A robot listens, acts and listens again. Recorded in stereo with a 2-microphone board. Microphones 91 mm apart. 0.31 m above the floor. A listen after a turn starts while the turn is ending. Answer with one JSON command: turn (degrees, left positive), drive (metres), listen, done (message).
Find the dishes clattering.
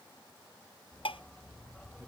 {"turn": 90}
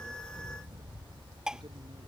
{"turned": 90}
{"done": "Facing the dishes clattering."}